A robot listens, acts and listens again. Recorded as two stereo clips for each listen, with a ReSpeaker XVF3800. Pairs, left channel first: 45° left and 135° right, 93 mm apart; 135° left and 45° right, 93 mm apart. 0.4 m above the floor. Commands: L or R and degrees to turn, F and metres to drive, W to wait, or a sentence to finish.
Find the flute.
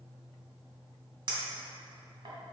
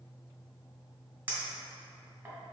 W
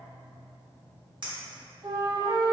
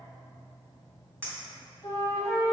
R170
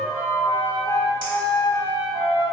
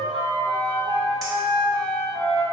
R10
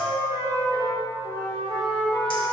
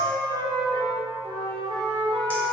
Facing the flute.